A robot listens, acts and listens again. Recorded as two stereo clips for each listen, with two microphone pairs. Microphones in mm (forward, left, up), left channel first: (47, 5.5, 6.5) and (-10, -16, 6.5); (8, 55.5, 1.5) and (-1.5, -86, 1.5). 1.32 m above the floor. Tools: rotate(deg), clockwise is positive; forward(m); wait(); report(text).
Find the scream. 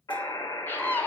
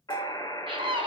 rotate(40)
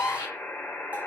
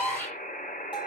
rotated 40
rotate(-10)
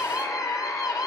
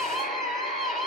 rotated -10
report("Facing the scream.")